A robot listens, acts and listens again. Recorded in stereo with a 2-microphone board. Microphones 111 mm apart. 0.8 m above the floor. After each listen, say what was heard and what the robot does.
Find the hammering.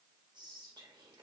Keep listening.
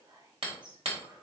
The hammering: about 65° right or 115° right. Turn 65° right.
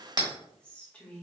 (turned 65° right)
So it is at 45° right. Turn 45° right.
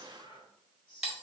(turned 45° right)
Facing the hammering, 1 to 2 m away.